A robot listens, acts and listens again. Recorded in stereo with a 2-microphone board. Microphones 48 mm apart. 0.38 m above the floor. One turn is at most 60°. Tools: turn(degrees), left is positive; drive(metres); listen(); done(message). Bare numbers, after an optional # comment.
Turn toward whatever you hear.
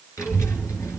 turn(60)
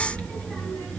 # So it is at 20° left.
turn(20)
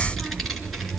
done("Facing the child speaking.")